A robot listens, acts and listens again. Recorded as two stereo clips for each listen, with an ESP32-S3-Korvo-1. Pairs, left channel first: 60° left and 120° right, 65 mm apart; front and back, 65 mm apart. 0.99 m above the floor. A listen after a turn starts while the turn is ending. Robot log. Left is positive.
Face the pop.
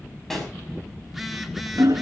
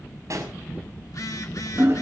note: The pop: 145° left.
cmd yaw +145
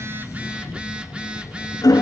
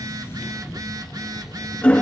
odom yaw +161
note: Nothing new. It was at 15° right.
cmd yaw -15
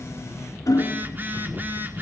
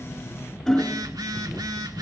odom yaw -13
end: I heard a pop from this way, but can't make it out now.